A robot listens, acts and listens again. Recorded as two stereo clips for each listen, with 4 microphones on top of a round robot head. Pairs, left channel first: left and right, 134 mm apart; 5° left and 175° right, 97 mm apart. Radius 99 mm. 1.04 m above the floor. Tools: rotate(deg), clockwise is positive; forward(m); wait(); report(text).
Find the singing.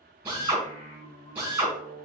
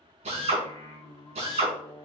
rotate(-55)
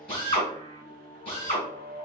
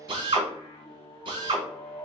rotate(-55)
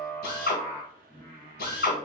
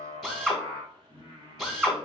rotate(-30)
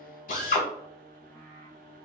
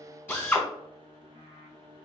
rotate(-15)
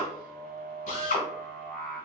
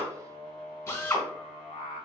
report("Found it: singing, straight ahead, 1 to 2 m away.")